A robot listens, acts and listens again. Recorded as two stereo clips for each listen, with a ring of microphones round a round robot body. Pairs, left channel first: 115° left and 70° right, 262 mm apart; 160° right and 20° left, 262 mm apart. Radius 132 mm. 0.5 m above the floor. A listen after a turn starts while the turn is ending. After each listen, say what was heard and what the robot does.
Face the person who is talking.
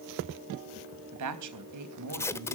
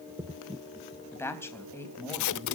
The woman speaking: 75° right. Turn 75° right.
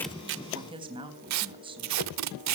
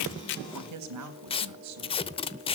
Facing the woman speaking.